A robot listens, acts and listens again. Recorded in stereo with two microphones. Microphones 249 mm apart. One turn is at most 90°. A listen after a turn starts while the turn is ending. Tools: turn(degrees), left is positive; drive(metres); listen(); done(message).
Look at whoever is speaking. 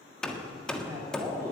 turn(degrees=-30)
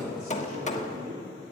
turn(degrees=-90)
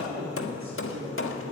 turn(degrees=-60)
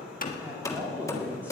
done("Facing the man speaking.")